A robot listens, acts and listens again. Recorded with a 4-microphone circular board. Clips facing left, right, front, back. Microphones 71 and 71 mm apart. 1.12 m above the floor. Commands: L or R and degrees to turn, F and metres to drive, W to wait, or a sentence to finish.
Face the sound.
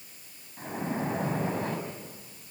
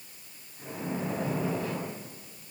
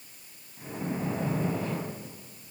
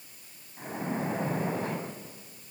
L130
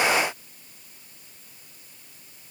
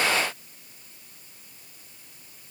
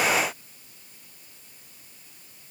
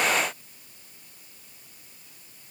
I heard a splash from this way, but can't make it out now.